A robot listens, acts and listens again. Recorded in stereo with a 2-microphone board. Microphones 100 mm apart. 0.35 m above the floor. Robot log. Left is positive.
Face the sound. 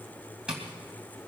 cmd yaw -30
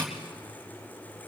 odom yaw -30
note: So it is at 20° left.
cmd yaw +20
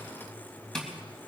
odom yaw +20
end: Found it: tapping, straight ahead.